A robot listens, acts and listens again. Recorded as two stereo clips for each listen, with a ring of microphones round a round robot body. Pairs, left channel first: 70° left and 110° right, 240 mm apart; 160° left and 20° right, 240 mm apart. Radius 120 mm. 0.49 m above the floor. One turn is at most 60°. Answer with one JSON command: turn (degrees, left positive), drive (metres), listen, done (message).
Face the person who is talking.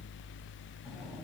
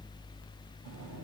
{"listen": true}
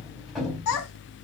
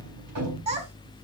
{"turn": 40}
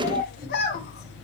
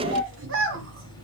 {"turn": 15}
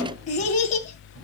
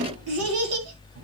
{"done": "Facing the child speaking, 2 to 4 m away."}